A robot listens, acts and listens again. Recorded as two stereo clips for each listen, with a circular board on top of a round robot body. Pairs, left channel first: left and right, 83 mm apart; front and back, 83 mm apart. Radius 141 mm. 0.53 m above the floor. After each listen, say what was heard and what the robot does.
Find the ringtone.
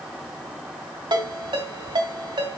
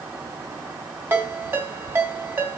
The ringtone: 115° right. Turn 115° right.
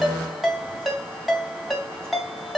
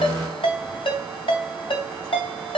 Facing the ringtone.